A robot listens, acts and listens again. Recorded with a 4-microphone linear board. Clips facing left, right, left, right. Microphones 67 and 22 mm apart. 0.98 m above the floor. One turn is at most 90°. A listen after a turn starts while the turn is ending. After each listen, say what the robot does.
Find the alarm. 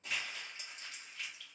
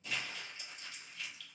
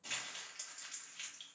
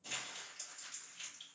Keep listening.
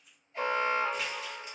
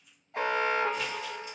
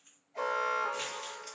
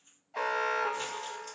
Turn 65° right.
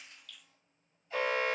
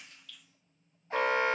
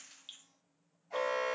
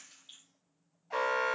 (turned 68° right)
Turn 50° right.
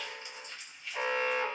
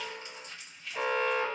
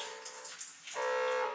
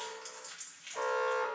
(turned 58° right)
Turn 10° left.
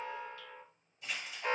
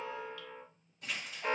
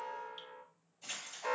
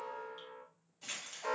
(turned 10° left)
Found it: an alarm, straight ahead, under 1 m away.